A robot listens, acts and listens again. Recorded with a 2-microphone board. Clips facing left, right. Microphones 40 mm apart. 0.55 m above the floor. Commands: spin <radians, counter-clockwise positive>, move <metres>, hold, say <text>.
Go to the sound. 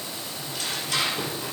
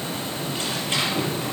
spin -0.52
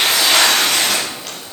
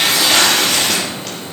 move 1.0
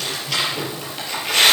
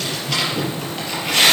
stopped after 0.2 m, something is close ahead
say Something is in my way. I am facing the tearing paper but have not reached it.